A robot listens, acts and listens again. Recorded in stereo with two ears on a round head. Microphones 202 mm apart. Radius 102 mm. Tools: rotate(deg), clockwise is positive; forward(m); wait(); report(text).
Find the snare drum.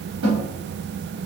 rotate(90)
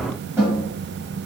rotate(10)
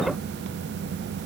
wait()
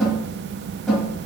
report("Facing the snare drum, 2 to 4 m away.")